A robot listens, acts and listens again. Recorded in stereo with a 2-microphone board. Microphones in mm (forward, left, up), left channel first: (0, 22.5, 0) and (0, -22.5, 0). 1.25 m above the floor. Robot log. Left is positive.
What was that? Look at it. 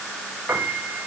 note: The piano: about 60° right or 120° right.
cmd yaw -60
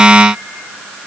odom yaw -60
cmd idle
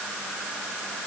cmd idle
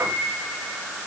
note: So it is at 55° right.
cmd yaw -55
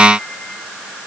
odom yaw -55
cmd idle
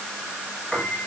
end: Facing the piano, over 4 m away.